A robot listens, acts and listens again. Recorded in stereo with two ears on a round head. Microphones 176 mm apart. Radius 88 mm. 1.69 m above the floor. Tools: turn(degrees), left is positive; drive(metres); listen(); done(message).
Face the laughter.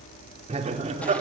turn(degrees=-40)
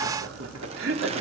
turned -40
turn(degrees=-100)
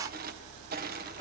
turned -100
listen()
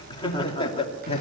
turn(degrees=30)
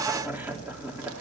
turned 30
turn(degrees=-10)
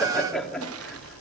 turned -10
done("Facing the laughter, 2 to 4 m away.")